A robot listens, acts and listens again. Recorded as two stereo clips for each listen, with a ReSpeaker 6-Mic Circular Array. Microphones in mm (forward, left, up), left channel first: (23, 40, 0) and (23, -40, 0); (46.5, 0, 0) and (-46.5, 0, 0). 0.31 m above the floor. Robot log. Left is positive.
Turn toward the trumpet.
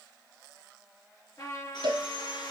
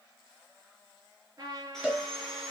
note: The trumpet: 130° left.
cmd yaw +130
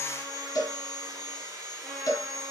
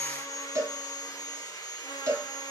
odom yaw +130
cmd idle
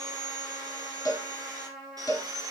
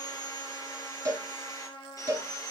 end: Facing the trumpet, 2 to 4 m away.